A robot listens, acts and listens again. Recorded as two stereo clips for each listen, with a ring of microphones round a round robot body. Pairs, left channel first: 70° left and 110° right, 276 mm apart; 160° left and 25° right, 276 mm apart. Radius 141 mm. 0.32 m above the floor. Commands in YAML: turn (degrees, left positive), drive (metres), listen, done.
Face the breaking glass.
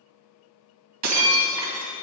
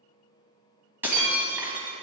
turn: -105
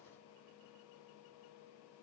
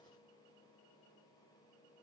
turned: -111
done: "Facing where the breaking glass came from. I can't hear it now."